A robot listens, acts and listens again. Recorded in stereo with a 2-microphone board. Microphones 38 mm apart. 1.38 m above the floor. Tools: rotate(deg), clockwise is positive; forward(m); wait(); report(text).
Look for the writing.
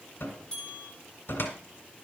wait()
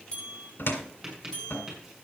rotate(30)
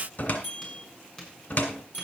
rotate(-15)
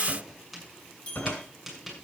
report("Found it: writing, straight ahead.")